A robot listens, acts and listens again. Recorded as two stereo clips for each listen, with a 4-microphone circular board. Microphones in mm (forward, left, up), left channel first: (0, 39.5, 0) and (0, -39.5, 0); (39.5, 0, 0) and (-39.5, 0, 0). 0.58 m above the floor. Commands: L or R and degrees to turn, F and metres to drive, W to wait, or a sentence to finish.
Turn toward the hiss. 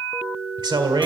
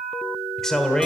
W
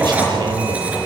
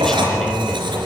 W
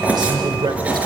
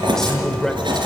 I can't make out a hiss, only writing and a man speaking.